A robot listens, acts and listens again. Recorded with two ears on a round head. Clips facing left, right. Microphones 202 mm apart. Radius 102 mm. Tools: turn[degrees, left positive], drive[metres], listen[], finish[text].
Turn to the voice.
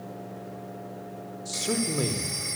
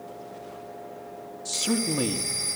Thought: The man speaking: about 75° right or 105° right.
Action: turn[-75]
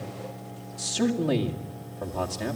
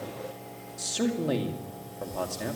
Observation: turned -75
Action: finish[Found it: a man speaking, straight ahead, 2 to 4 m away.]